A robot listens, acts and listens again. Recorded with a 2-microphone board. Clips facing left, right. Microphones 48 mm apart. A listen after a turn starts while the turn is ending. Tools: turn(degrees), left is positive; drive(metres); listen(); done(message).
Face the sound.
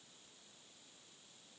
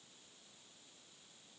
listen()
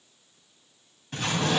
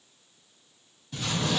turn(degrees=50)
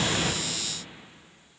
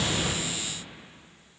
listen()
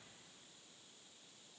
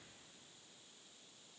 done("I heard an explosion, but can't make it out now. It was about straight ahead or 80° left.")